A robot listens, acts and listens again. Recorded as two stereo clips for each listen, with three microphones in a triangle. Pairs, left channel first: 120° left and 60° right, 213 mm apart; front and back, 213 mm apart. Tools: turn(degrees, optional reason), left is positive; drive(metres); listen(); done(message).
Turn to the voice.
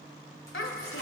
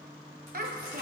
turn(degrees=135, reason="The child speaking: 135° left.")
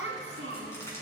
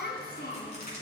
turn(degrees=-40, reason="The child speaking is now 40° right.")
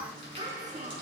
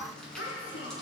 done("Found it: a child speaking, straight ahead.")